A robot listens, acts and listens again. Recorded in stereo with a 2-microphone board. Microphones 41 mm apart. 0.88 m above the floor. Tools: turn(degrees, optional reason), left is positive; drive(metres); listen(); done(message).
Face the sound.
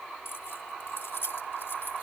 turn(degrees=90)
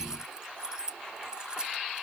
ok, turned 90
turn(degrees=-20, reason="So it is at 20° right.")
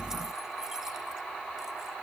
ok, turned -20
listen()
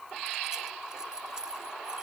turn(degrees=-20, reason="The keys jangling is now 20° right.")
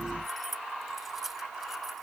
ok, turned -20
turn(degrees=-10, reason="The keys jangling is now 10° right.")
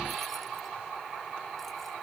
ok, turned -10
listen()
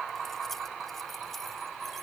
listen()
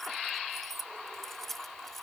done("Facing the keys jangling.")